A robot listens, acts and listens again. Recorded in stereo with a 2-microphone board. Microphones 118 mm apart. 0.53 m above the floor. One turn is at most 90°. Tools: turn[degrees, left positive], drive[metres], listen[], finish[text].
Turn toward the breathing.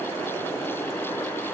Action: listen[]
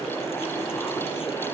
Action: listen[]
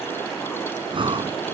Thought: The breathing: about 45° right or 135° right.
Action: turn[-45]
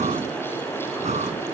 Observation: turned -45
Thought: So it is at 85° right.
Action: turn[-85]
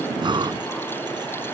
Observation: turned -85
Thought: The breathing is now 40° right.
Action: turn[-40]
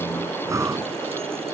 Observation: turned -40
Thought: The breathing is now 25° right.
Action: turn[-25]
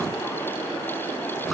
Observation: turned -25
Action: finish[Found it: breathing, straight ahead.]